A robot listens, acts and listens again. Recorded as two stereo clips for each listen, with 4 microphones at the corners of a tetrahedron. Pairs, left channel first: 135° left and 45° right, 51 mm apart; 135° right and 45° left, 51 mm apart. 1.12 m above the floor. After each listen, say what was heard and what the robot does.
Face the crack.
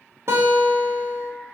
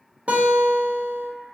Keep listening.
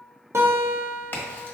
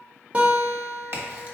The crack: 85° left. Turn 85° left.
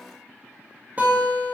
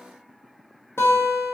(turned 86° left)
Facing where the crack came from. I can't hear it now.